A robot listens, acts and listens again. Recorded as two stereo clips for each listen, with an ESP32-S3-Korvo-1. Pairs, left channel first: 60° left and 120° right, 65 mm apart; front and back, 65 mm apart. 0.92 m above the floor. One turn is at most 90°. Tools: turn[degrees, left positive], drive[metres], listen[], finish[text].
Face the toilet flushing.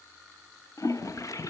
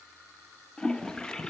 Thought: The toilet flushing: 75° left.
Action: turn[75]
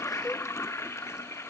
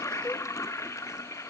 Thought: The toilet flushing is now 25° left.
Action: turn[25]
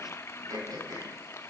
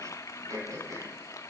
Thought: The toilet flushing is now 20° left.
Action: turn[20]
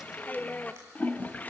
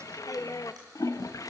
Action: finish[Found it: a toilet flushing, straight ahead.]